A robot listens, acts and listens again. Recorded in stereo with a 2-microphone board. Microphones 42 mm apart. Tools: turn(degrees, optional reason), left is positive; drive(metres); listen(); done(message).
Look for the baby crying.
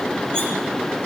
listen()
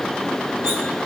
listen()
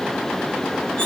done("I can't make out a baby crying to turn to.")